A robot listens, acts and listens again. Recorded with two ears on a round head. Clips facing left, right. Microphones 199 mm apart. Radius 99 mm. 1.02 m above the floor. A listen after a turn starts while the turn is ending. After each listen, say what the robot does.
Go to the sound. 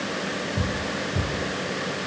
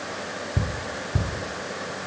Turn 70° right.
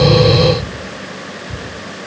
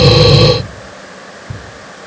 Turn 35° right.
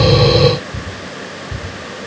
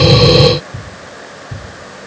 Drive 1.0 m forward.
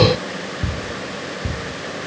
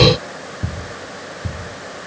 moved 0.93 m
Turn 10° left.
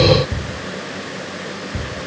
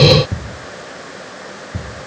Drive 1.0 m forward.
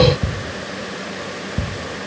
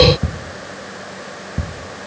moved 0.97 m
Drive 1.0 m forward.
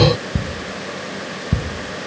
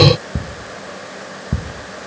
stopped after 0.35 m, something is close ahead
I am next to the ticking.